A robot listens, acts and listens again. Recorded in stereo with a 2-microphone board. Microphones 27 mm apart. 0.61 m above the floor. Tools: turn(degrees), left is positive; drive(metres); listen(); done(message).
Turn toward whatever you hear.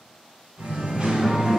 turn(degrees=-35)
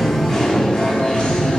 turn(degrees=45)
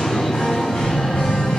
turn(degrees=50)
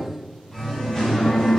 turn(degrees=10)
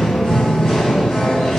done("Found it: singing, straight ahead, 2 to 4 m away.")